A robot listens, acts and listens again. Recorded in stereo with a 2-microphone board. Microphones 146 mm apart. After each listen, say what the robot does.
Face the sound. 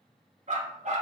Turn 50° right.
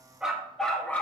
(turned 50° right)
Turn 15° left.
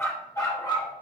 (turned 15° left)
Turn 30° left.
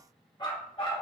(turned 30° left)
Turn 35° left.
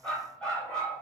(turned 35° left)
Found it: a dog barking, straight ahead, 2 to 4 m away.